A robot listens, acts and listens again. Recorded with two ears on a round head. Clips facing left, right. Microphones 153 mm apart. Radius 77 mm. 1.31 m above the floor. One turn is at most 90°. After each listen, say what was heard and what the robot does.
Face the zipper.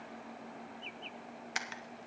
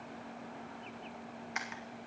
Keep listening.
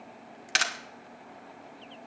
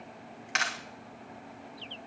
Keep listening.
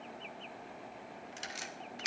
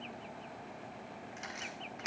I can't make out a zipper, only a camera shutter.